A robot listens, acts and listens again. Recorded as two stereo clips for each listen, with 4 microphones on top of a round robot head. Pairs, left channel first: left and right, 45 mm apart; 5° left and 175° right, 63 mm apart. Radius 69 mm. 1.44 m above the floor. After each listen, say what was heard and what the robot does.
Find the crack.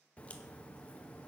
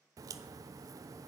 The crack: 160° left. Turn 160° left.
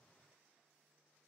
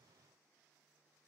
I heard a crack from this way, but can't make it out now.